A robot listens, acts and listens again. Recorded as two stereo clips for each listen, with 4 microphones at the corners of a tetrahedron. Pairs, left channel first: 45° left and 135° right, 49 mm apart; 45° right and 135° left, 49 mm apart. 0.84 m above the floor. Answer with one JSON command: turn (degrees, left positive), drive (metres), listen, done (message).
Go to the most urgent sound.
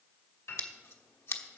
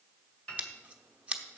{"listen": true}
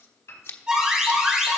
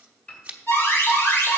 {"turn": -60}
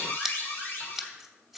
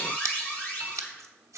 {"drive": 1.0}
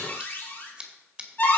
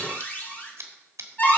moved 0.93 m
{"drive": 1.0}
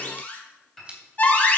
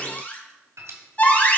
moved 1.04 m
{"drive": 1.0}
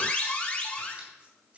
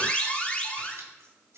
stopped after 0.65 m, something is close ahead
{"done": "I am next to the alarm."}